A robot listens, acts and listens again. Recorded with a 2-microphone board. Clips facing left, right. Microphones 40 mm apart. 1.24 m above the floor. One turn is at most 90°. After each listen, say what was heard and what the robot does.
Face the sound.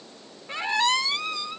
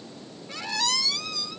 The squeak: about 35° left or 145° left. Turn 35° left.
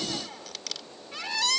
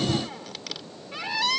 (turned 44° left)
So it is at 10° right. Turn 10° right.
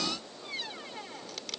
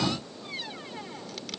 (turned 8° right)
Facing the squeak.